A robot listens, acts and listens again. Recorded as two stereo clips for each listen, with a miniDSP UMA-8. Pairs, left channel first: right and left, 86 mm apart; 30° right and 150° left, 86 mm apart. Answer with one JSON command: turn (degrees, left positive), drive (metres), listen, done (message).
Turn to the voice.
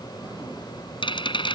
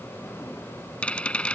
{"listen": true}
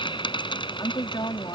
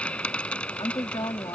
{"turn": -55}
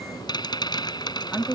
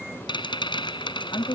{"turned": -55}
{"done": "Found it: a woman speaking, straight ahead."}